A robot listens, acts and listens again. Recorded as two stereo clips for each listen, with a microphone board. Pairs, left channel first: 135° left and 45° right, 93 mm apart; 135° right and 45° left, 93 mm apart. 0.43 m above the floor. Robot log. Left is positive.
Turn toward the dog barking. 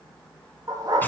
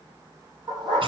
note: The dog barking: 10° left.
cmd yaw +10
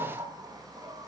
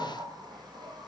cmd idle
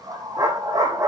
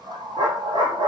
end: Found it: a dog barking, straight ahead, over 4 m away.